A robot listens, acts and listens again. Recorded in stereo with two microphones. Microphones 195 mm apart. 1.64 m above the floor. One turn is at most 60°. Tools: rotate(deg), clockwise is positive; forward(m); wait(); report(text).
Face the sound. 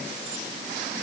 wait()
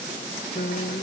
rotate(-55)
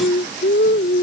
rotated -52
rotate(-60)
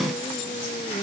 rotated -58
rotate(-25)
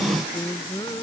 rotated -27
rotate(-25)
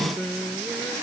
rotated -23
report("Facing the singing.")